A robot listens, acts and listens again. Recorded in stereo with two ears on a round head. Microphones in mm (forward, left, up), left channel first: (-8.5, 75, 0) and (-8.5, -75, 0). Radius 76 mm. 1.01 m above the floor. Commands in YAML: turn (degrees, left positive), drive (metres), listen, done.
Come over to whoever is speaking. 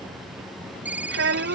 turn: -90
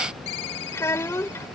turn: 15
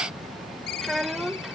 drive: 1.0
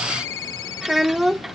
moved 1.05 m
drive: 1.0
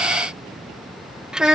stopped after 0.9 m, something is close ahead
done: "Arrived at the child speaking, straight ahead."